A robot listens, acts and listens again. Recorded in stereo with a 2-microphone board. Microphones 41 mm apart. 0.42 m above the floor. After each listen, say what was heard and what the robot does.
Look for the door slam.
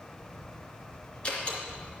The door slam: about 30° left or 150° left. Turn 30° left.
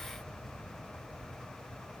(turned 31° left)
Keep listening.
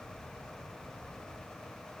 I heard a door slam, but can't make it out now. It was about straight ahead or 115° left.